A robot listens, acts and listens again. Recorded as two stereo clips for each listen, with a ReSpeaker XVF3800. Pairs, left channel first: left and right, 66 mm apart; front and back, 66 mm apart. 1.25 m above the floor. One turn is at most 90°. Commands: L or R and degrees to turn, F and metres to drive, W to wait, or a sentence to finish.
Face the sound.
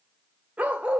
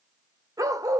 R90
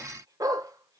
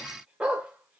R90
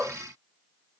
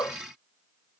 R30
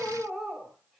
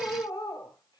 Found it: a dog barking, straight ahead.